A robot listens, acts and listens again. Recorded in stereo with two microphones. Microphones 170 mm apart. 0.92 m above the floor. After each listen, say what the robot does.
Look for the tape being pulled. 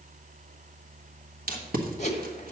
Turn 60° right.
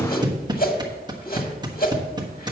Turn 30° right.
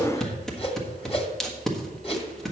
Found it: tape being pulled, straight ahead.